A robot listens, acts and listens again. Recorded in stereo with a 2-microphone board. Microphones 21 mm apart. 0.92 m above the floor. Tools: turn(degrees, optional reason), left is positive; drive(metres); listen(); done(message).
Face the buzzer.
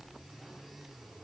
listen()
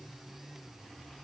listen()
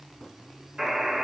turn(degrees=-35, reason="The buzzer: about 35° right or 145° right.")
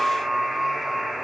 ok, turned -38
done("Found it: a buzzer, straight ahead.")